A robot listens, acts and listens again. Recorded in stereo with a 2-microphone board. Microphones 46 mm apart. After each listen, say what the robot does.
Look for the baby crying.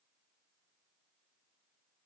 Keep listening.
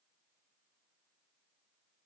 Keep listening.
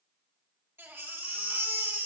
Turn 75° right.
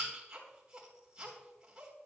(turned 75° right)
Turn 20° right.
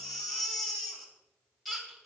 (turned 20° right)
Found it: a baby crying, straight ahead.